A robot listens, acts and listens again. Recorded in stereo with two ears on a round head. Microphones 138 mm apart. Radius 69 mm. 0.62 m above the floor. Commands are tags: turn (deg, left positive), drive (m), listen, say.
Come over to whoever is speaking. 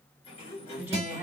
<turn deg="-30"/>
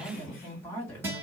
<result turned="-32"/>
<turn deg="15"/>
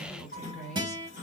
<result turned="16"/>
<drive m="1.0"/>
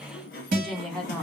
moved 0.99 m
<drive m="1.0"/>
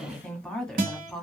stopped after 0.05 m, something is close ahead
<say>I am next to the woman speaking.</say>